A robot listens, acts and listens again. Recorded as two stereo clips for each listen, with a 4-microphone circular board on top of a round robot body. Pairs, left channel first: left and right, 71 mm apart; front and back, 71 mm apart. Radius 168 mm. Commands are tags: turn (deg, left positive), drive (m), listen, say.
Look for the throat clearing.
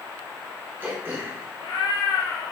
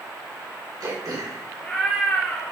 <turn deg="-150"/>
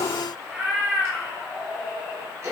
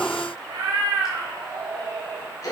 <turn deg="-40"/>
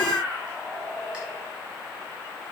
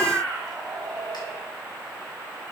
<listen/>
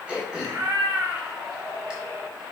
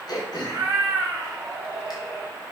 <turn deg="-15"/>
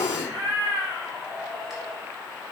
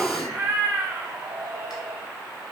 <listen/>
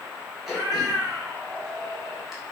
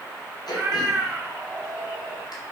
<say>Found it: throat clearing, straight ahead, 2 to 4 m away.</say>